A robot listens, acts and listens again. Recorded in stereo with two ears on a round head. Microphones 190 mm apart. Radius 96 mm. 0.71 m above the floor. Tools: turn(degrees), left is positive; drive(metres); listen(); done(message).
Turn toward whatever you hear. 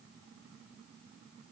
listen()
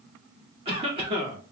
turn(degrees=-25)
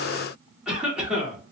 done("Facing the cough, 1 to 2 m away.")